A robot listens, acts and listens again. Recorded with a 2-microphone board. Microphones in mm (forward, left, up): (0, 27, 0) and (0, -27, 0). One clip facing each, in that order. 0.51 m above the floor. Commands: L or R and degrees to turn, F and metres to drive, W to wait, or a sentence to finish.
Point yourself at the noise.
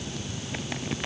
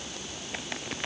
W
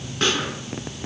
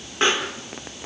R20
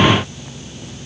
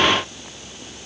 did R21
W
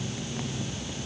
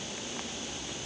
I heard a pop, but can't make it out now. It was about straight ahead or 135° right.